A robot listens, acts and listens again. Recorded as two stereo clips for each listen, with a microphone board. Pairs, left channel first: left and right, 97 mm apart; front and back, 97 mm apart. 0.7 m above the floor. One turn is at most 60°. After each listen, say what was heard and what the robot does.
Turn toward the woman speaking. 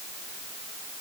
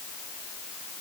Keep listening.
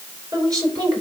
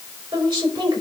The woman speaking: 140° right. Turn 60° right.
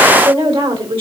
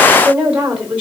The woman speaking is now 105° right. Turn 60° right.
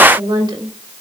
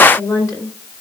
The woman speaking is now 55° right. Turn 55° right.
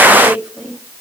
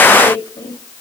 The woman speaking is now 10° right. Turn 10° right.
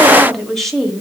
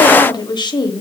Facing the woman speaking, 1 to 2 m away.